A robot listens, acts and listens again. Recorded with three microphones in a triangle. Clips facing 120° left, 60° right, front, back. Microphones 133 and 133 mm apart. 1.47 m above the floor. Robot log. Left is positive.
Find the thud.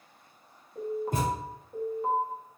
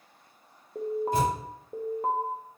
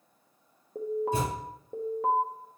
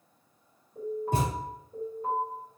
note: The thud: 160° left.
cmd yaw +160
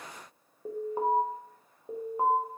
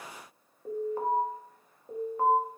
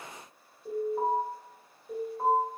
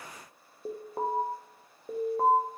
end: I heard a thud from this way, but can't make it out now.